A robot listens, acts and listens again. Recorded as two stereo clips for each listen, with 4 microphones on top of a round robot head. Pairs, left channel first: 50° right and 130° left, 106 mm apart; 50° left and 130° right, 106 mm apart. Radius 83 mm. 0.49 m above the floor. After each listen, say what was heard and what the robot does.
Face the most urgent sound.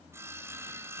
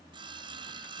Keep listening.
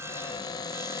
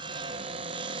Keep listening.
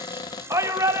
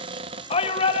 The shout: 70° left. Turn 70° left.
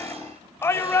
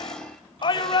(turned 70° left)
The shout is now 15° left. Turn 15° left.
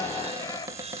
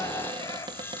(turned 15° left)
Facing the shout, 2 to 4 m away.